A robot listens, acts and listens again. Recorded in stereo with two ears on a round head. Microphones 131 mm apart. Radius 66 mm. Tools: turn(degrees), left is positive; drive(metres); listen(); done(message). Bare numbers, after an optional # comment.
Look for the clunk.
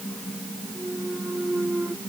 turn(-30)
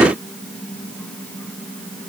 listen()
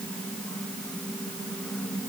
done("I heard a clunk, but can't make it out now. It was about 20° left or 140° right.")